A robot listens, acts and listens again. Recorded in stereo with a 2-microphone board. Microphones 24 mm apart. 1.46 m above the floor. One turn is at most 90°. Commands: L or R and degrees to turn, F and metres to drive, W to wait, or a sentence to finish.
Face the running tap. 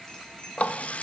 L60
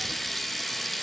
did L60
Facing the running tap, 1 to 2 m away.